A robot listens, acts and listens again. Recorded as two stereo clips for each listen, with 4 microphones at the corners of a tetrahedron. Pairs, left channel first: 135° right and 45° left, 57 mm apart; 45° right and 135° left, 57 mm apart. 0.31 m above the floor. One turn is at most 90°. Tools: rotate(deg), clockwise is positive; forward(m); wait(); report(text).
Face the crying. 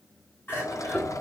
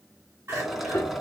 rotate(-90)
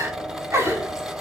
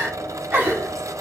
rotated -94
rotate(-75)
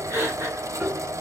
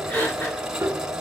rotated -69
report("Facing the crying.")